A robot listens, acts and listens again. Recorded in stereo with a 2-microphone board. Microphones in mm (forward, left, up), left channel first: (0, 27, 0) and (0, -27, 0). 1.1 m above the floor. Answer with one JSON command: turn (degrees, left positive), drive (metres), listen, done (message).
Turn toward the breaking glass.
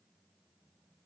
{"listen": true}
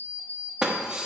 {"turn": -30}
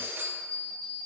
{"listen": true}
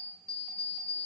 {"done": "I heard breaking glass, but can't make it out now. It was about 15° left or 135° right."}